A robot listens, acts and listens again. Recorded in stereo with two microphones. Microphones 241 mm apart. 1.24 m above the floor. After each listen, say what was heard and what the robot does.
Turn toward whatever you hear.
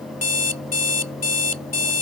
Turn 90° left.
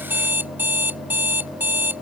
So it is at 10° right. Turn 10° right.
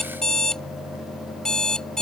Facing the alarm clock.